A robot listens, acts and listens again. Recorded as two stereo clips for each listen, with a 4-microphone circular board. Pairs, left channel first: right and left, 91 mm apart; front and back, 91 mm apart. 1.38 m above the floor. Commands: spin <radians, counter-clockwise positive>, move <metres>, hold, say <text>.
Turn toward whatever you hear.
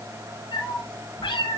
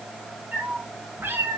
spin -2.01
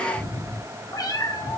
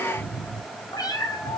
spin -0.87
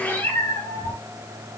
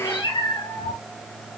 spin -0.44
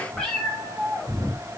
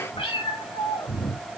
spin -0.17
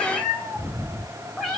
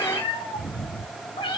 say Found it: a cat meowing, straight ahead, over 4 m away.